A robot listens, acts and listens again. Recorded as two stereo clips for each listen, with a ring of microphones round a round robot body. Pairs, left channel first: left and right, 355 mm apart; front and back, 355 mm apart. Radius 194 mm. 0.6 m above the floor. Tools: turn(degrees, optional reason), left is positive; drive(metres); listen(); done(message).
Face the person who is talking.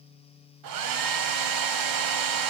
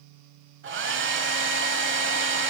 listen()
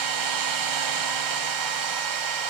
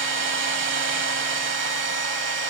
listen()
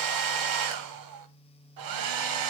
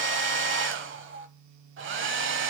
done("I can't make out anyone speaking to turn to.")